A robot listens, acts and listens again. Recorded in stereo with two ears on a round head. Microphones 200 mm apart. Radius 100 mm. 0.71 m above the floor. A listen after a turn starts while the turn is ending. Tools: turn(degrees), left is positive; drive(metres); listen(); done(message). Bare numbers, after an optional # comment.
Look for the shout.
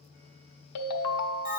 listen()
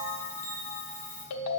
listen()
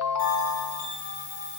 done("I can't make out a shout to turn to.")